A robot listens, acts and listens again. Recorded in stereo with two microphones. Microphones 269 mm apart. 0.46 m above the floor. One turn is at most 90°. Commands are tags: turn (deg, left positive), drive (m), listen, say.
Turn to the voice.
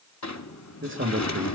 <turn deg="-45"/>
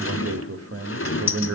<turn deg="-80"/>
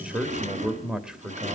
<say>Facing the man speaking.</say>